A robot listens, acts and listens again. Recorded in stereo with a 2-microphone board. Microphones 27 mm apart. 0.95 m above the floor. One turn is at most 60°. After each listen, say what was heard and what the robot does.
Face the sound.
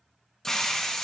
The hiss: about 15° left or 165° left. Turn 15° left.
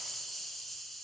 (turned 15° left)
Found it: a hiss, straight ahead.